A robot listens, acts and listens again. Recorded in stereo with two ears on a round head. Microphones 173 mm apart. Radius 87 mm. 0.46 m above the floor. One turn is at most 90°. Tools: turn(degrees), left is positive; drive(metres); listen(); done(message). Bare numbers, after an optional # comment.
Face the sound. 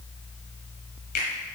# The finger snap: about 50° left or 130° left.
turn(50)
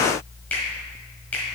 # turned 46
# So it is at 10° left.
turn(10)
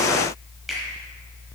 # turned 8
done("Facing the finger snap.")